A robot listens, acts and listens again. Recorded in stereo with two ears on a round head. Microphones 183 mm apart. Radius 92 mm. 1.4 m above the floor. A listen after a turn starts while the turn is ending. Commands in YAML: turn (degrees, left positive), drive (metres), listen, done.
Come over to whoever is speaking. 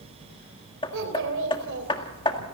turn: -70
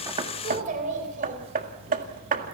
turn: -40
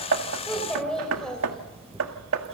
drive: 1.0
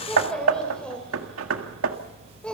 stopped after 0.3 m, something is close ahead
done: "Something is in my way. I am facing the child speaking but have not reached it."